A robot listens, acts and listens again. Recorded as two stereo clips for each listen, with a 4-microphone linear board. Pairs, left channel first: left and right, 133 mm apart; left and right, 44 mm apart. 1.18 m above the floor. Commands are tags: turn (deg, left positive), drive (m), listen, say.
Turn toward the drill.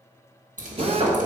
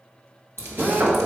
<turn deg="-45"/>
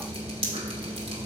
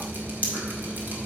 <listen/>
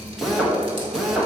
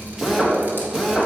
<say>Facing the drill, 1 to 2 m away.</say>